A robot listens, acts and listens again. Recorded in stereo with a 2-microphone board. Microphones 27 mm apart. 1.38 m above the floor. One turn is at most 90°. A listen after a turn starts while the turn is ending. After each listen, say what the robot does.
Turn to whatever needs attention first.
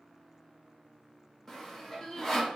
Turn 20° left.
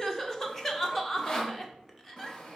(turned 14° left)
Turn 10° left.
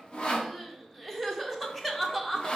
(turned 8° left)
Found it: crying, straight ahead, under 1 m away.